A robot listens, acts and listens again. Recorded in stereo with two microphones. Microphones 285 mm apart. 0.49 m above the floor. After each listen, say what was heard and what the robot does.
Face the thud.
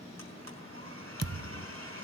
The thud: about 60° right or 120° right. Turn 60° right.
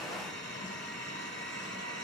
Keep listening.
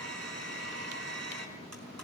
I heard a thud, but can't make it out now. It was about straight ahead or 60° right.